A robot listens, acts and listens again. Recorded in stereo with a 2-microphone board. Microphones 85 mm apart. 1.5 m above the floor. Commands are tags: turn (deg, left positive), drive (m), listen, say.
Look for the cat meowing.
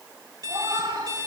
<turn deg="-65"/>
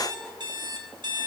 <listen/>
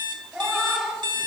<say>Found it: a cat meowing, straight ahead.</say>